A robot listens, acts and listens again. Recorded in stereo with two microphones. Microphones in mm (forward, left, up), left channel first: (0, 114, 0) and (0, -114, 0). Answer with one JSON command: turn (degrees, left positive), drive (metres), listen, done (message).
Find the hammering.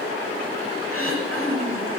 {"listen": true}
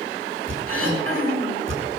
{"turn": -55}
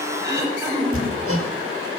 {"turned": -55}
{"turn": -70}
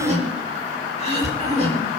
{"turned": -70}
{"turn": -30}
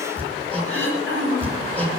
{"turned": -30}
{"done": "Facing the hammering, over 4 m away."}